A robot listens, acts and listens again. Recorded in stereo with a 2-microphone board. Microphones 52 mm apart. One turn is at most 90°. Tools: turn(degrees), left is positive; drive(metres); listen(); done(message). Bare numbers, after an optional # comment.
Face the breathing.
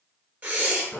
# The breathing: about 35° right or 145° right.
turn(-35)
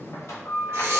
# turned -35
listen()
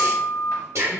# So it is at 110° right.
turn(-90)
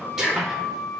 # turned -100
# The breathing is now 10° right.
turn(-10)
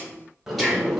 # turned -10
done("Found it: breathing, straight ahead.")